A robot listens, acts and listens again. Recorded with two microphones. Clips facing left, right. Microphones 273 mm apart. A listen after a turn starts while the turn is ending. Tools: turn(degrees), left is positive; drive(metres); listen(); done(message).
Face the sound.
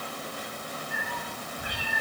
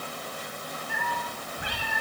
turn(degrees=-90)
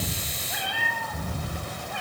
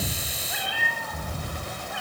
done("Facing the cat meowing, over 4 m away.")